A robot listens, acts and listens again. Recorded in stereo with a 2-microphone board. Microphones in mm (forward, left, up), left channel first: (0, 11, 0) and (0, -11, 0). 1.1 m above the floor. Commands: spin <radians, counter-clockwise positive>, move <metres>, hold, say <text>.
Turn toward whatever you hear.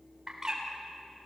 spin -0.44
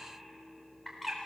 say Found it: a bird, straight ahead, 2 to 4 m away.